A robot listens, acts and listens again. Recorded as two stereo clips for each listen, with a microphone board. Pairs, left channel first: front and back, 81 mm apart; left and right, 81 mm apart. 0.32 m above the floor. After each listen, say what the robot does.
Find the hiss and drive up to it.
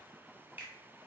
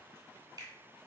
Keep listening.
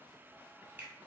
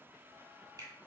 Keep listening.
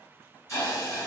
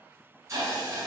Turn 45° right.
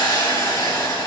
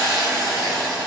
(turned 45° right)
Drive 1.0 m forward.
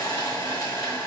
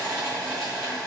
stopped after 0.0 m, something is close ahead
Turn 10° left.
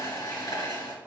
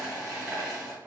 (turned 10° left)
Blocked. The hiss is further on, straight ahead.